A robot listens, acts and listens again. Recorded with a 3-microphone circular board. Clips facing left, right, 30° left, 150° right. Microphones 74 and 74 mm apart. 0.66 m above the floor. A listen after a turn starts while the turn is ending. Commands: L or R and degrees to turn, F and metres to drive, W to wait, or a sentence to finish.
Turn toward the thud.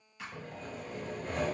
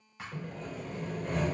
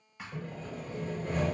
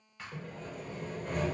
R50
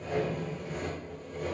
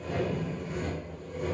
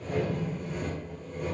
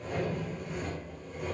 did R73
L25
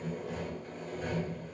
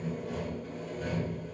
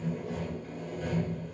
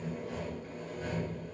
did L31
I heard a thud from this way, but can't make it out now.